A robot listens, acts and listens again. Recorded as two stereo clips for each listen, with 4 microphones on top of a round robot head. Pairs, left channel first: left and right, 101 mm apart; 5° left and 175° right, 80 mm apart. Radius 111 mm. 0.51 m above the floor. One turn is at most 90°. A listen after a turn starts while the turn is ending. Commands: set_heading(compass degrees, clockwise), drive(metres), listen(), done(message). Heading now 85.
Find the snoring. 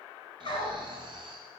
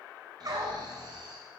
set_heading(175)
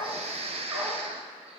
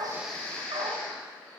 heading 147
set_heading(222)
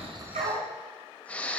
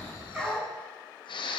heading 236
set_heading(226)
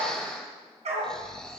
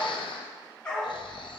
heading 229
done("Facing the snoring, 1 to 2 m away.")